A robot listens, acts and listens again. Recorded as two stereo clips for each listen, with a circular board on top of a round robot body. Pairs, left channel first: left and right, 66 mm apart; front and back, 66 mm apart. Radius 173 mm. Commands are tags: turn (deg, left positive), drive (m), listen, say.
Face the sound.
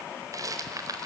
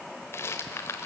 <turn deg="-50"/>
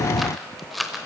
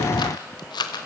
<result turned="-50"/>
<say>Found it: a rattle, straight ahead, under 1 m away.</say>